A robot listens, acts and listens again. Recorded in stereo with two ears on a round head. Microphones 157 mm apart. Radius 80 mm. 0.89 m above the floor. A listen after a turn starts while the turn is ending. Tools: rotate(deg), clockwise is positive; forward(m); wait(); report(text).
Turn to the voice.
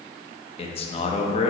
rotate(-35)
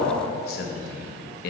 rotate(-110)
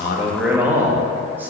rotate(10)
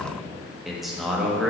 report("Found it: a man speaking, straight ahead, 1 to 2 m away.")